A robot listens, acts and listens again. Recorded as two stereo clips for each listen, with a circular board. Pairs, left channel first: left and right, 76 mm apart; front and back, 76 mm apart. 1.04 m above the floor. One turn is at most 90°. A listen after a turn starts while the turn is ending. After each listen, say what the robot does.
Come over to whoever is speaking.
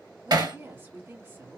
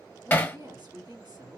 Turn 90° right.
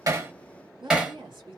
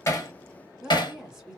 Turn 90° right.
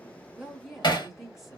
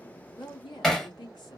Drive 1.0 m forward.
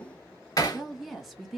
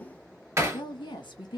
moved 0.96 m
Drive 1.0 m forward.
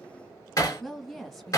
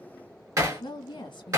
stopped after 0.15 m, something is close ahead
Arrived at the woman speaking, straight ahead.